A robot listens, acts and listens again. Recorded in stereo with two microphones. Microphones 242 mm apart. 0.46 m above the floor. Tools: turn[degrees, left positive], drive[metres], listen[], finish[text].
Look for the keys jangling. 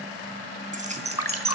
Thought: The keys jangling: about 25° right or 155° right.
Action: turn[-25]
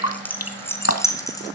Thought: So it is at 15° left.
Action: turn[15]
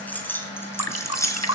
Thought: The keys jangling is now 10° left.
Action: turn[10]
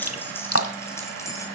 Thought: The keys jangling is now 10° left.
Action: turn[10]
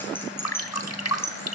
Thought: The keys jangling is now 10° left.
Action: turn[10]
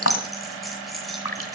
Action: finish[Facing the keys jangling.]